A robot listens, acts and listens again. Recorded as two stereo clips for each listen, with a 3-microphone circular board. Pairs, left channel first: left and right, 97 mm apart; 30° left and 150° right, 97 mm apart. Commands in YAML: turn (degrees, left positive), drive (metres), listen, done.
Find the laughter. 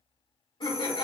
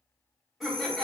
turn: 120
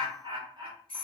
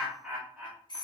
turn: -85
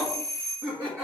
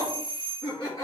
turn: -20
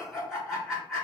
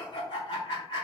done: "Facing the laughter, 1 to 2 m away."